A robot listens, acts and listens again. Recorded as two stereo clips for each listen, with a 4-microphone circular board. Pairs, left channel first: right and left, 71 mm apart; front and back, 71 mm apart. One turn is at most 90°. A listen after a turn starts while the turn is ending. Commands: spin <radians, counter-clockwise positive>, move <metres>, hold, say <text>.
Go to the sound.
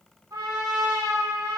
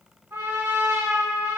spin 1.57
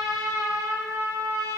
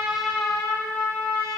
spin 0.87
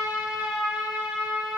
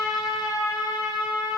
spin 0.26
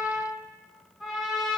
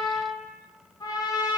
move 1.0
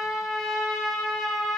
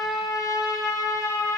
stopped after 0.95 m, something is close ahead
say I am next to the trumpet.